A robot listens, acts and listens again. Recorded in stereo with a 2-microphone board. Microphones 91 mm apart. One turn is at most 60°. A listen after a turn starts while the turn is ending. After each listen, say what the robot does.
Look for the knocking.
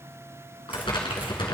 Keep listening.
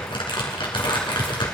Keep listening.
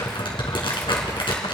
I can't make out knocking to turn to.